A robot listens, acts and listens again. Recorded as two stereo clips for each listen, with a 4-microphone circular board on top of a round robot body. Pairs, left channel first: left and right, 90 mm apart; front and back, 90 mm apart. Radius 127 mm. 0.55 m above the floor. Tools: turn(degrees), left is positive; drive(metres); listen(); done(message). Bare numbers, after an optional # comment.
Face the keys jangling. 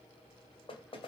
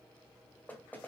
listen()
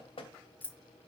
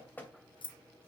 # The keys jangling: 20° left.
turn(20)
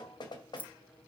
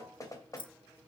# The keys jangling is now 20° left.
turn(20)
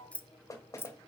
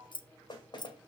# The keys jangling is now 30° left.
turn(30)
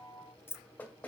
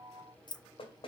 # The keys jangling is now 30° left.
turn(30)
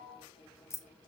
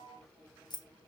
# The keys jangling is now 35° left.
turn(35)
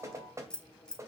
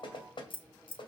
# The keys jangling is now 10° left.
turn(10)
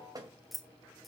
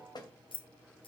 done("Found it: keys jangling, straight ahead.")